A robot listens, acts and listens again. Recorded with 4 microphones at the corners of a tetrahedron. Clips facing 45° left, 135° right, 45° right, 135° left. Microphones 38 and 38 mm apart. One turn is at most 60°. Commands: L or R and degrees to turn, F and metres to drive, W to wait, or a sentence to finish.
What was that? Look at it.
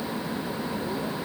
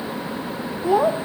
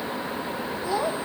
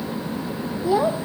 R60
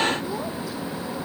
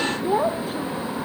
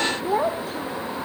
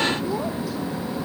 R60
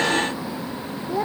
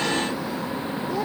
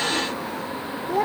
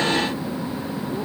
R30
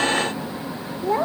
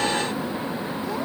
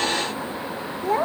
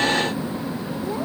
Facing the child speaking.